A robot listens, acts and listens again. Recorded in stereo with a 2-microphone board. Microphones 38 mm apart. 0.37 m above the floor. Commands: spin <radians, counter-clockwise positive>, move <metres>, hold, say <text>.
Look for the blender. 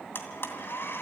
spin 1.22
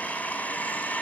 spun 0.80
spin 0.79
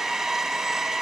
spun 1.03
spin -0.26
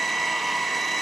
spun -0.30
say Found it: a blender, straight ahead.